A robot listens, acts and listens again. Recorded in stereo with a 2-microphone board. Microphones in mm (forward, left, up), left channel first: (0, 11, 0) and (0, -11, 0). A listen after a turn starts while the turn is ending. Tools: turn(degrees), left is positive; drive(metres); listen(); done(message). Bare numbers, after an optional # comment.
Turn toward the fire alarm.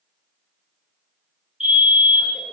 # The fire alarm: about 40° right or 140° right.
turn(-40)
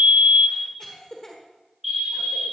# So it is at 15° right.
turn(-15)
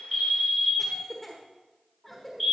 done("Facing the fire alarm, 2 to 4 m away.")